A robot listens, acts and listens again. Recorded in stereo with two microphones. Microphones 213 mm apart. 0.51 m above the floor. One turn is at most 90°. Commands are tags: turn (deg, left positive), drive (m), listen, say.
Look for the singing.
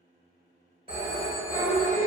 <turn deg="15"/>
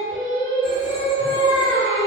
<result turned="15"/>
<say>Facing the singing.</say>